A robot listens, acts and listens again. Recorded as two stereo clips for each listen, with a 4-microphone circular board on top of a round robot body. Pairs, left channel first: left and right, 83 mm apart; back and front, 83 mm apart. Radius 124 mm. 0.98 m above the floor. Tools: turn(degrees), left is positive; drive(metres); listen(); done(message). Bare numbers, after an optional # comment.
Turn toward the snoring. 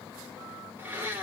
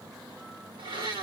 listen()
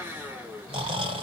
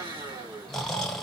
# The snoring: 95° right.
turn(-95)
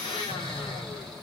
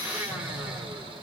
done("Found it: snoring, straight ahead.")